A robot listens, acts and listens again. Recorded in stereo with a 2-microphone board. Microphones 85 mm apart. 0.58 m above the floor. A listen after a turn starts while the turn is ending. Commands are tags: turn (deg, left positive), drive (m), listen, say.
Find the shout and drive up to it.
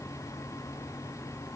<listen/>
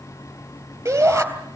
<turn deg="-35"/>
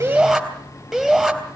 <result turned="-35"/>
<drive m="1.0"/>
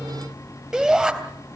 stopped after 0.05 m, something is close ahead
<say>Something is in my way. I am facing the shout but have not reached it.</say>